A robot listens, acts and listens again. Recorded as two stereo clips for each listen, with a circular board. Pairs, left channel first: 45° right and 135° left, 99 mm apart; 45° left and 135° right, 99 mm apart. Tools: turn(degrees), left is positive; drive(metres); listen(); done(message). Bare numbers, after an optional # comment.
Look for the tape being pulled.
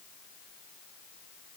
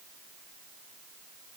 listen()
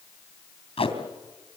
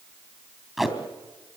# The tape being pulled: 50° right.
turn(-50)
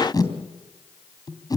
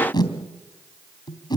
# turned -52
done("Facing the tape being pulled.")